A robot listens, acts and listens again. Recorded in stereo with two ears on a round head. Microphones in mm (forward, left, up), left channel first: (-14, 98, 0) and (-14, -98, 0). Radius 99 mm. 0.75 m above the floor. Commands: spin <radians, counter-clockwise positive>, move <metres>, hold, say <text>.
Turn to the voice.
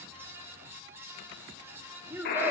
spin -0.52
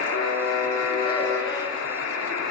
hold
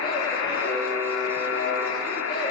hold
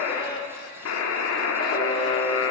say I heard a child speaking, but can't make it out now. It was about 20° left or 140° right.